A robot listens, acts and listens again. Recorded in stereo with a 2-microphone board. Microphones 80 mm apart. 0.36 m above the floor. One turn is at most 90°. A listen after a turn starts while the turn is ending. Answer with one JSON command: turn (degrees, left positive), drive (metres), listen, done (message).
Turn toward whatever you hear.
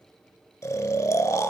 {"turn": 40}
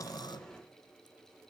{"listen": true}
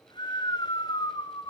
{"turn": 90}
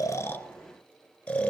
{"turn": 15}
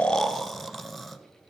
{"done": "Facing the snoring, under 1 m away."}